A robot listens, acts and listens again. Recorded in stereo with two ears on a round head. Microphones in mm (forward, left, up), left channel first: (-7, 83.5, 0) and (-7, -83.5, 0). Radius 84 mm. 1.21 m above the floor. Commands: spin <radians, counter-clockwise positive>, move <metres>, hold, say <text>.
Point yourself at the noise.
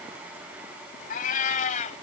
spin 0.70
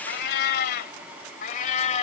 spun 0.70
spin 0.70
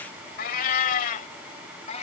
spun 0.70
spin 0.70
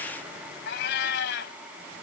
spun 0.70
spin 2.01
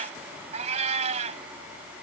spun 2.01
spin -0.61
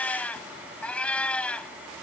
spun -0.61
say Found it: a cat meowing, straight ahead.